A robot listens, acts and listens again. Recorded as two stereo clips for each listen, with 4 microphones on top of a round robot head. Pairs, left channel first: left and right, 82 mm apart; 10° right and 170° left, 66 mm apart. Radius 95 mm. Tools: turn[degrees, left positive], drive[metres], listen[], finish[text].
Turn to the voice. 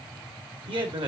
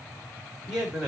Thought: The man speaking: 105° right.
Action: turn[-105]
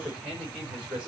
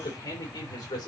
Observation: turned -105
Thought: The man speaking is now 10° right.
Action: turn[-10]
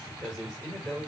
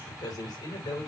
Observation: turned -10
Action: finish[Found it: a man speaking, straight ahead, over 4 m away.]